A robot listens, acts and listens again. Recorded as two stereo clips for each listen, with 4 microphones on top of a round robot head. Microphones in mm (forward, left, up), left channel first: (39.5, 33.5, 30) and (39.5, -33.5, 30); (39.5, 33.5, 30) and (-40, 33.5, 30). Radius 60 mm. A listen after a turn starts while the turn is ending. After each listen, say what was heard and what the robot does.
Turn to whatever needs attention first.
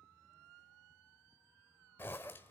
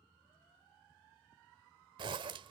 Keep listening.
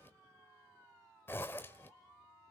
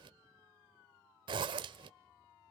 Keep listening.
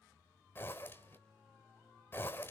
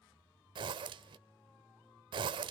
I can't make out anything urgent to turn to.